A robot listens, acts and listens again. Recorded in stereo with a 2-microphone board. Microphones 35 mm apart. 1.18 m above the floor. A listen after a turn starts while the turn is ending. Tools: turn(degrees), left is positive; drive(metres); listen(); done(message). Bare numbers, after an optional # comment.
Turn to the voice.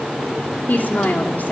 # The woman speaking: about 60° left or 120° left.
turn(60)
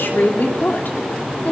# So it is at 60° left.
turn(60)
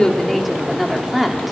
done("Facing the woman speaking, 2 to 4 m away.")